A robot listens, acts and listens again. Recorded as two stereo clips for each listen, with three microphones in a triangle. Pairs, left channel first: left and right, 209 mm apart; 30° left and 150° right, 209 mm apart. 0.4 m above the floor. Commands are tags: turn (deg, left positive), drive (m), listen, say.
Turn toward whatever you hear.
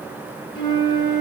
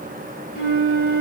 <turn deg="25"/>
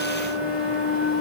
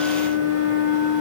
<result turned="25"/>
<say>Found it: a flute, straight ahead, 1 to 2 m away.</say>